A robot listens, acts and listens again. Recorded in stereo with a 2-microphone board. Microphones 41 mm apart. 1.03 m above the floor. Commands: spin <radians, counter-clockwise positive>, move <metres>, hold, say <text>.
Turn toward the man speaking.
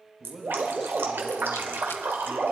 spin -0.52
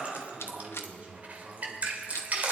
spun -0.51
spin -2.44
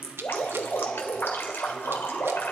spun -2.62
spin 0.17
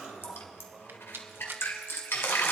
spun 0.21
hold
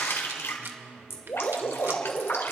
say Found it: a man speaking, straight ahead, over 4 m away.